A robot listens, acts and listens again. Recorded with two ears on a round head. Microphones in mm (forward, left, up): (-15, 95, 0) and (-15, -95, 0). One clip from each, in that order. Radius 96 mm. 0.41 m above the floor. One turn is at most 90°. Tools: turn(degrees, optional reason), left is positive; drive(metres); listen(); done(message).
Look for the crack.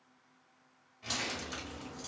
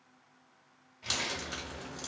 turn(degrees=-45, reason="The crack: about 45° right or 135° right.")
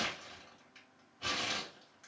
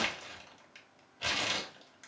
listen()
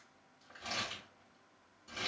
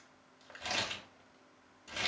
done("I heard a crack, but can't make it out now. It was about straight ahead or 90° right.")